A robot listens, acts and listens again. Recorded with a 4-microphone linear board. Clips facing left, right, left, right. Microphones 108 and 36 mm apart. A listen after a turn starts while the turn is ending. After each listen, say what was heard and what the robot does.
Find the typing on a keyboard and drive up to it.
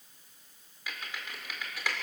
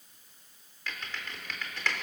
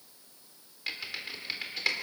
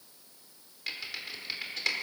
Turn 30° left.
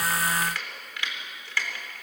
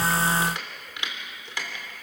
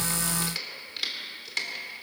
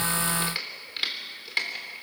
So it is at 20° right. Turn 20° right.
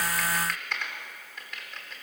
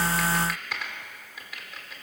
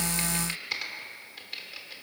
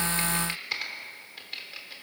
Drive 1.0 m forward.
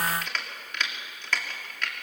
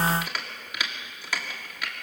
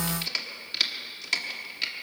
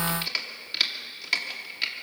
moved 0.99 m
The typing on a keyboard is now 10° right. Turn 10° right.
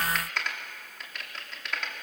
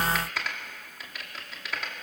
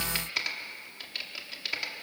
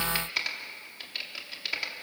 Drive 1.0 m forward.
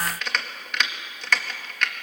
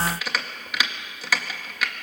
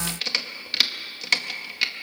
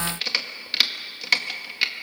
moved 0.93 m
Drive 1.0 m forward.
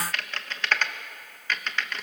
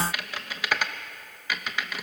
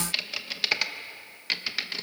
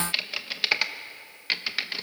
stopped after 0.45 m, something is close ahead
The typing on a keyboard is now 10° right. Turn 10° right.
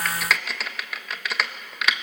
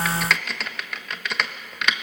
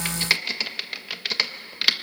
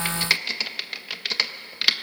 I am next to the typing on a keyboard.